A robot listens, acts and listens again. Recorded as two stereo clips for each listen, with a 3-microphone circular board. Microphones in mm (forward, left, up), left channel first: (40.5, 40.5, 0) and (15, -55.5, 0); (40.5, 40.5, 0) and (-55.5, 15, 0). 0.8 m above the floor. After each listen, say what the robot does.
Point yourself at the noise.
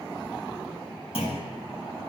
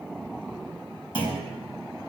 Turn 50° left.
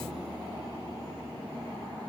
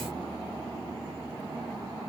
I heard a clunk from this way, but can't make it out now.